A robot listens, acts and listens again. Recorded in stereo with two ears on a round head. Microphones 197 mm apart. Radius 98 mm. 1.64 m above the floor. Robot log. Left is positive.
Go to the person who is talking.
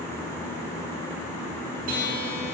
cmd idle
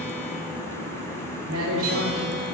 cmd yaw -90
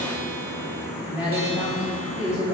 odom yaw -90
cmd fwd 1.0
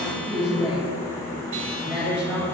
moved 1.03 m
cmd fwd 1.0
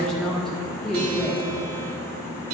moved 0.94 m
cmd fwd 1.0
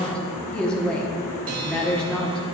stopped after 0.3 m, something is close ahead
end: Arrived at the woman speaking, straight ahead.